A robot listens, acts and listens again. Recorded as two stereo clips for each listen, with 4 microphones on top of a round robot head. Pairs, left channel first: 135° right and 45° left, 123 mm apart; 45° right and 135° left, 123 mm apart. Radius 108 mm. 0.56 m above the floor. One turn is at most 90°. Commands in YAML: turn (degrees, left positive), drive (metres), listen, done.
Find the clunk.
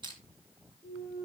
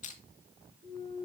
turn: 90
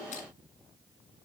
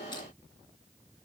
turn: 30
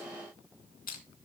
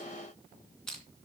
done: "Facing where the clunk came from. I can't hear it now."